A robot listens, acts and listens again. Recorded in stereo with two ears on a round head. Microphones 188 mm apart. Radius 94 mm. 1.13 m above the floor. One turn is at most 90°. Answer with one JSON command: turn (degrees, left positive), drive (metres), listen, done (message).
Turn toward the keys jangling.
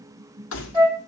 {"turn": 60}
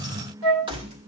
{"turn": -30}
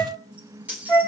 {"turn": -10}
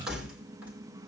{"done": "Found it: keys jangling, straight ahead, 2 to 4 m away."}